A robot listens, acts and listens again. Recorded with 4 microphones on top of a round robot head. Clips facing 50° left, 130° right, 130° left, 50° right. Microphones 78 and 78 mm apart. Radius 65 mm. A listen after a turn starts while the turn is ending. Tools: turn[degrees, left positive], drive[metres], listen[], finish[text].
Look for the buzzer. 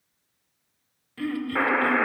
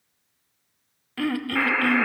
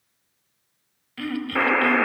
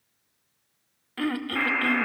Thought: The buzzer: 105° left.
Action: turn[105]
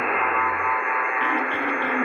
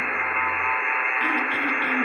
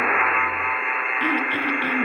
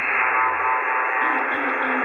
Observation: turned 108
Action: finish[Facing the buzzer.]